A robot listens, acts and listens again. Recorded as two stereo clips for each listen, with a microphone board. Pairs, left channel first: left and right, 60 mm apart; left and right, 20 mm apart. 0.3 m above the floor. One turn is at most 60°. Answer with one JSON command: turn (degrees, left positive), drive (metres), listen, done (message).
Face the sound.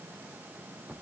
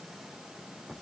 {"listen": true}
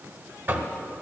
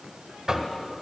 {"turn": -40}
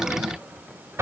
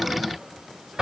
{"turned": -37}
{"turn": -60}
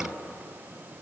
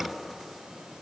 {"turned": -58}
{"turn": -30}
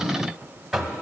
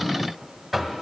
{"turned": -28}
{"done": "Found it: knocking, straight ahead."}